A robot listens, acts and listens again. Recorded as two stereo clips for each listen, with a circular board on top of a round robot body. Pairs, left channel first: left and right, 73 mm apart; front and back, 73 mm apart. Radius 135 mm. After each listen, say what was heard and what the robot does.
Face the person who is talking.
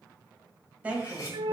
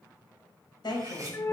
The woman speaking: 20° right. Turn 20° right.
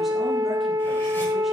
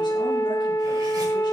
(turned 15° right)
Keep listening.
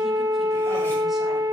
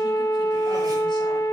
Keep listening.
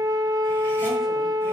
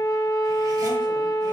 Facing where the woman speaking came from. I can't hear it now.